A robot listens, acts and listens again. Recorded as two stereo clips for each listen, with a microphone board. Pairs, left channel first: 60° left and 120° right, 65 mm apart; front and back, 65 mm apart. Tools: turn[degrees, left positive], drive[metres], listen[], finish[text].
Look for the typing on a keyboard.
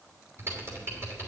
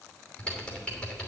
Thought: The typing on a keyboard: 70° right.
Action: turn[-70]
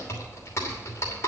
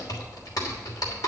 Thought: The typing on a keyboard is now 15° left.
Action: turn[15]
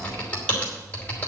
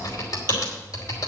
Action: finish[Facing the typing on a keyboard.]